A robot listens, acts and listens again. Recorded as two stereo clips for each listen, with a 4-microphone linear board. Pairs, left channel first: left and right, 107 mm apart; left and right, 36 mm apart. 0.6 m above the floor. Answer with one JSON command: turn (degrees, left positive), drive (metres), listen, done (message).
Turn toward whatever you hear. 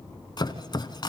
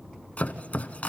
{"turn": 45}
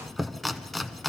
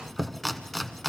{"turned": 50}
{"done": "Facing the chopping, under 1 m away."}